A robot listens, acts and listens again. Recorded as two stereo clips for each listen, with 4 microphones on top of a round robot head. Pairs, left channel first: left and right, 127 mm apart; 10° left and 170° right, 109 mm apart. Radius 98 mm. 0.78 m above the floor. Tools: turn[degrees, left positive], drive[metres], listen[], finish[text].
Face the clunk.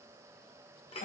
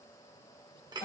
Action: listen[]
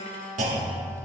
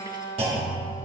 Thought: The clunk: 120° right.
Action: turn[-120]
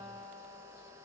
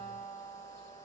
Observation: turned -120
Action: finish[Facing where the clunk came from. I can't hear it now.]